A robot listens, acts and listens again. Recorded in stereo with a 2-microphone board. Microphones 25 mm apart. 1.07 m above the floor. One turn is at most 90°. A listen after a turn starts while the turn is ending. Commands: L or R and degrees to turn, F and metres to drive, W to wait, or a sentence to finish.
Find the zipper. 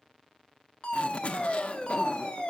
L55
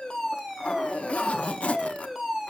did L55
L60
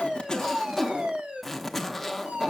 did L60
Facing the zipper.